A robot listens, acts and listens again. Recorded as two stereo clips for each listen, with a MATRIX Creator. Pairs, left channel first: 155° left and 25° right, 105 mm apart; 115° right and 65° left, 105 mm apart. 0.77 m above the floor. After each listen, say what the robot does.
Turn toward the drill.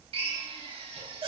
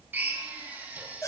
Facing the drill, 2 to 4 m away.